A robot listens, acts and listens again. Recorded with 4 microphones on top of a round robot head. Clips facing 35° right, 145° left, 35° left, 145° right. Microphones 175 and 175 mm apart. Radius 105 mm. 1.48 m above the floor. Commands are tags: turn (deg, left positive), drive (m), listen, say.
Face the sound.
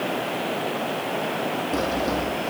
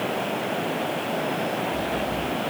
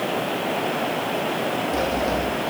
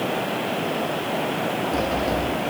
<turn deg="-50"/>
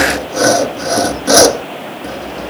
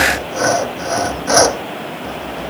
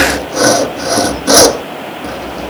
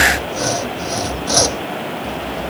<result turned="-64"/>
<turn deg="15"/>
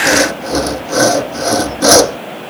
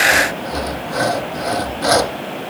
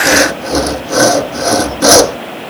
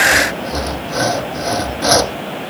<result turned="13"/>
<say>Facing the sawing.</say>